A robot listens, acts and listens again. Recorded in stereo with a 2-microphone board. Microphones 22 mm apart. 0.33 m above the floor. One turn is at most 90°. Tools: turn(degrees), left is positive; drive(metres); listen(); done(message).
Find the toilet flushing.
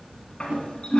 turn(degrees=50)
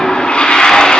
turn(degrees=75)
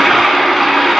done("Found it: a toilet flushing, straight ahead.")